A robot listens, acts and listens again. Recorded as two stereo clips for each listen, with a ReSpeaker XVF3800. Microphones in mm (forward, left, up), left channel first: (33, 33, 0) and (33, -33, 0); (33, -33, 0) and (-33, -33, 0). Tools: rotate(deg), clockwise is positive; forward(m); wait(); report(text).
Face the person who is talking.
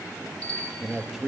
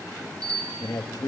report("Facing the man speaking, 1 to 2 m away.")